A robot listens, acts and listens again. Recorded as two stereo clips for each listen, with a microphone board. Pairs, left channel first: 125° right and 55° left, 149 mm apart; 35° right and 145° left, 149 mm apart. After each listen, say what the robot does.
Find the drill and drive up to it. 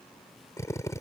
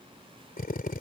Turn 55° right.
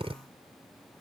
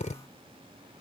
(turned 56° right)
Drive 1.0 m forward.
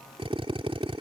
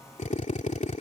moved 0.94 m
Drive 1.0 m forward.
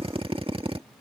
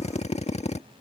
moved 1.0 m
Drive 1.0 m forward.
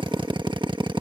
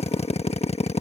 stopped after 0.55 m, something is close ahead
I am next to the drill.